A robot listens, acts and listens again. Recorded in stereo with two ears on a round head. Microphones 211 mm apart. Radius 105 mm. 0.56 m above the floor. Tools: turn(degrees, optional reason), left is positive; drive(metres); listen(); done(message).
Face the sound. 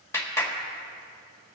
turn(degrees=30)
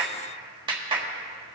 turn(degrees=-20, reason="So it is at 20° right.")
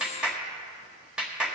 done("Facing the clap.")